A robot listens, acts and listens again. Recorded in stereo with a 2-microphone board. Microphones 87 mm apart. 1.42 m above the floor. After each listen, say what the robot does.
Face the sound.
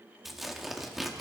Turn 30° left.
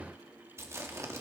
Turn 30° right.
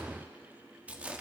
Turn 15° right.
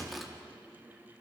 Found it: tearing paper, straight ahead.